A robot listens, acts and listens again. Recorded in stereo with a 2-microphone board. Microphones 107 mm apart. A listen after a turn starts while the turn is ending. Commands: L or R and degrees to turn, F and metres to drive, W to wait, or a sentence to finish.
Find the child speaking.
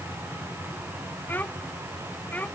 L30
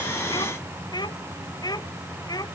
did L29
L140
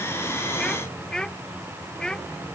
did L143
Facing the child speaking.